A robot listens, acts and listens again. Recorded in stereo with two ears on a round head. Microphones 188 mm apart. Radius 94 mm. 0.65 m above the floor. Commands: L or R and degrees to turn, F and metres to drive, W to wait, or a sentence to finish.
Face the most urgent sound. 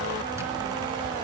W
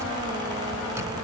W
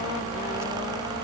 I can't make out anything urgent to turn to.